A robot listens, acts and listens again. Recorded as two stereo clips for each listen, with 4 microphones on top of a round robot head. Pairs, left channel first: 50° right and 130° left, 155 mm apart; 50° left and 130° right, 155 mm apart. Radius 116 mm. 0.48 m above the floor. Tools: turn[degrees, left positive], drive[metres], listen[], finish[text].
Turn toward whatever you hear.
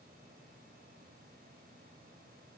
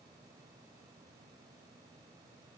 Action: listen[]
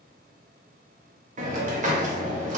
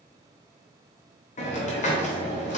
Thought: The hiss: 90° left.
Action: turn[90]
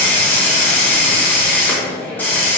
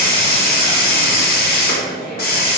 Thought: The hiss is now 30° left.
Action: turn[30]
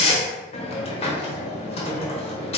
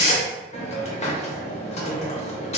Action: finish[Facing the hiss.]